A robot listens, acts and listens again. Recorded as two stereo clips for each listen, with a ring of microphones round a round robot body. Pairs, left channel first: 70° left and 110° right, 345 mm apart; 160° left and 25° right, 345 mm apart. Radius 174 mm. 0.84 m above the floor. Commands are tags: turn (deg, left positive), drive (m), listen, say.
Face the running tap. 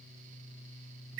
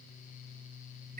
<listen/>
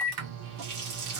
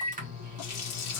<turn deg="-155"/>
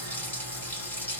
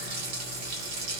<turn deg="-20"/>
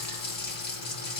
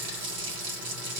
<say>Found it: a running tap, straight ahead.</say>